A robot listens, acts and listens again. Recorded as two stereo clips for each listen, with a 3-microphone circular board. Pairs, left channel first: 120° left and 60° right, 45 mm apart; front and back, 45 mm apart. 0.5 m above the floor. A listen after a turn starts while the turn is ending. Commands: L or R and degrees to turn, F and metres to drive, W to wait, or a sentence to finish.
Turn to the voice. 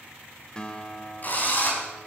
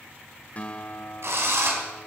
W
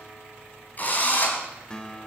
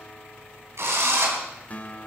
W
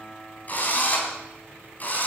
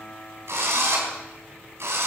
I can't make out anyone speaking, only a drill and a guitar.